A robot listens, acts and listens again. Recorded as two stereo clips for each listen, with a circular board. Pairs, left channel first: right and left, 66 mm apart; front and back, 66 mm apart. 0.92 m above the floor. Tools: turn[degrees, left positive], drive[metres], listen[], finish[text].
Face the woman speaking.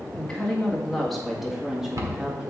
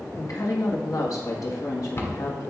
Thought: The woman speaking: 10° left.
Action: turn[10]
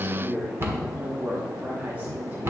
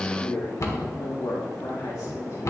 Thought: The woman speaking is now 20° left.
Action: turn[20]
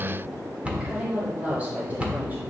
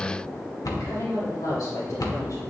Thought: The woman speaking is now 25° left.
Action: turn[25]
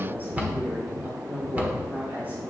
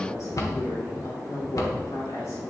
Thought: The woman speaking is now 30° left.
Action: turn[30]
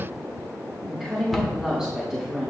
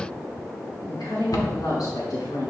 Action: finish[Found it: a woman speaking, straight ahead, 2 to 4 m away.]